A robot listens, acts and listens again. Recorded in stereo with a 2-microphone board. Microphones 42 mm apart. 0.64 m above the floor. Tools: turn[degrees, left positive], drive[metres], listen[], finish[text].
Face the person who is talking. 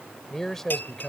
Action: turn[30]
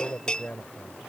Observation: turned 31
Thought: So it is at 140° left.
Action: turn[140]
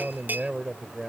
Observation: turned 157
Thought: The man speaking is now 15° right.
Action: turn[-15]
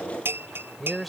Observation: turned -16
Action: finish[Facing the man speaking.]